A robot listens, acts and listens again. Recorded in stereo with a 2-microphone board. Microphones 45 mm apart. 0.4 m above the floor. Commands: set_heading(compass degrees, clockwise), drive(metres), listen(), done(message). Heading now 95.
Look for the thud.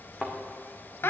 set_heading(75)
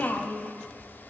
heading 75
listen()
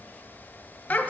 done("I heard a thud, but can't make it out now. It was about straight ahead or 140° left.")